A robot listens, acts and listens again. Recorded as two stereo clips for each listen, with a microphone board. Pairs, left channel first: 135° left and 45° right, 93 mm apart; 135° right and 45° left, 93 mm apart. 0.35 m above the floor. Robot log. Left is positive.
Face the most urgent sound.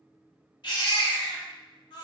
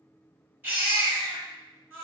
note: The baby crying: 115° left.
cmd yaw +115
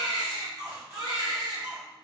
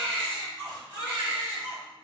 note: The baby crying is now 15° right.
cmd yaw -15
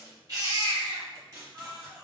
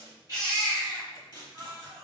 end: Found it: a baby crying, straight ahead.